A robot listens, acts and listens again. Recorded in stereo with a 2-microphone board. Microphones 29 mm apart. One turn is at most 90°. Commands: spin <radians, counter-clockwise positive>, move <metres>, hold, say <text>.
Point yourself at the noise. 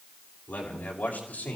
spin 1.22
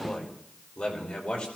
spin 0.79
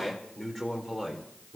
spin 0.35
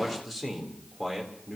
say Found it: a man speaking, straight ahead.